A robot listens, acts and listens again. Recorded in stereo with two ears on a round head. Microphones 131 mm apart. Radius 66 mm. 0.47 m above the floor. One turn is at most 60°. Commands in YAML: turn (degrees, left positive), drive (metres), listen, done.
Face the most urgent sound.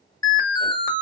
turn: 25
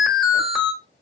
done: "Found it: an alarm, straight ahead, under 1 m away."